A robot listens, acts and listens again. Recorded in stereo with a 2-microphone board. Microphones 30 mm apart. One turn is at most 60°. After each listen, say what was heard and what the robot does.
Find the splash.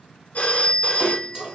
The splash: about 35° right or 145° right. Turn 35° right.
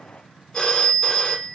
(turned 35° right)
Keep listening.
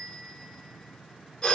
I heard a splash, but can't make it out now. It was about straight ahead or 110° right.